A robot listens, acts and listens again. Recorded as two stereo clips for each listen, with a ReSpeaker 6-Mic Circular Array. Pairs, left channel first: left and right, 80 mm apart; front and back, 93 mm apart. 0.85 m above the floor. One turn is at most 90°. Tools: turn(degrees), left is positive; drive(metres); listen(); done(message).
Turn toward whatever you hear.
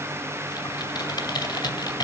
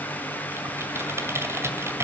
turn(degrees=90)
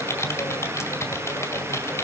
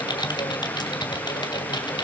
turn(degrees=35)
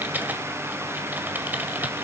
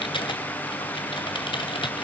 turn(degrees=-20)
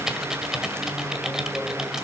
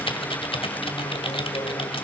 done("Facing the typing on a keyboard.")